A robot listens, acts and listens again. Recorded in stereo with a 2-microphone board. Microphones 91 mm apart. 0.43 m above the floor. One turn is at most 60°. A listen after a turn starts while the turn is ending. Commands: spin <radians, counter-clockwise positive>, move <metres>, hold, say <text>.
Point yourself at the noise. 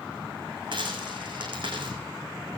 spin -1.05
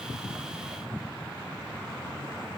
hold
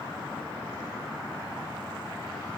say I heard a dropped coin, but can't make it out now. It was about straight ahead or 60° right.